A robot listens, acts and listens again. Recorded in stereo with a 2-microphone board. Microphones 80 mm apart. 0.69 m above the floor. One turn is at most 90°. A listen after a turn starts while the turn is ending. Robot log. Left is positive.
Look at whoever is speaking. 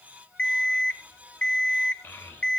note: The child speaking: about 25° left or 155° left.
cmd yaw +25
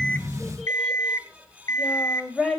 end: Facing the child speaking.